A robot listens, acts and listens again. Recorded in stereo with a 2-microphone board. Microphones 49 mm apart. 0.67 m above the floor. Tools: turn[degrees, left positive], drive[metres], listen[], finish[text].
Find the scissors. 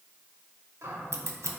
Thought: The scissors: about 75° right or 105° right.
Action: turn[-75]
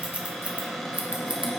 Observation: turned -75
Thought: So it is at 30° right.
Action: turn[-30]
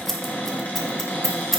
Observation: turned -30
Action: finish[Facing the scissors.]